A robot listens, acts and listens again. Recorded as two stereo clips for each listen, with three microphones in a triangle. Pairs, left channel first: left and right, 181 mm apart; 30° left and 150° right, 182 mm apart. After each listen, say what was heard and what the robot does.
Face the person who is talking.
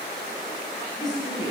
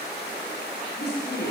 The woman speaking: 25° left. Turn 25° left.
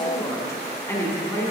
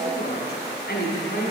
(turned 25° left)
The woman speaking is now 15° left. Turn 15° left.
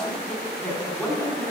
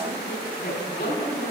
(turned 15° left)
Found it: a woman speaking, straight ahead, 2 to 4 m away.